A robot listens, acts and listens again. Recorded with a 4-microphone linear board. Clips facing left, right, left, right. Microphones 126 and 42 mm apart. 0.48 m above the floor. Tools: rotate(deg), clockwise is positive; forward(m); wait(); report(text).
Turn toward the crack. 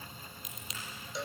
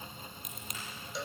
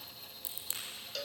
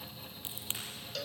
rotate(50)
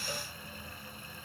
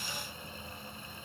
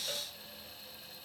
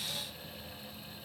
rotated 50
wait()
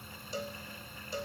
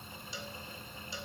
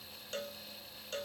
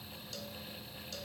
report("I heard a crack, but can't make it out now. It was about straight ahead or 80° right.")